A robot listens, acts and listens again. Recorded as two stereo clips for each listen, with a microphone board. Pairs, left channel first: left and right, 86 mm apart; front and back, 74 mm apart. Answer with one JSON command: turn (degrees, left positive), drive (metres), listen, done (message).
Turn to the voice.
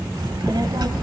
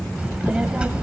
{"turn": -105}
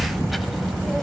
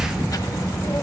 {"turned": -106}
{"done": "Facing the child speaking, 1 to 2 m away."}